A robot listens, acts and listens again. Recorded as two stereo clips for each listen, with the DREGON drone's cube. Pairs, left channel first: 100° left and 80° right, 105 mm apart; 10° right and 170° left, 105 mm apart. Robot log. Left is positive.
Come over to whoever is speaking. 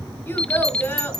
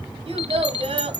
note: The child speaking: 170° left.
cmd yaw +170
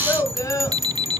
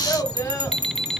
note: The child speaking is now 45° left.
cmd yaw +45
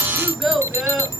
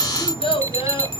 note: The child speaking is now 10° left.
cmd yaw +10
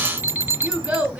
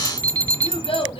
cmd fwd 1.0
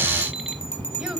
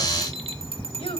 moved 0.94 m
cmd idle
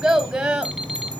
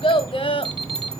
cmd fwd 1.0
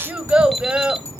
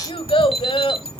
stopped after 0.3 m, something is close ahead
end: I am next to the child speaking.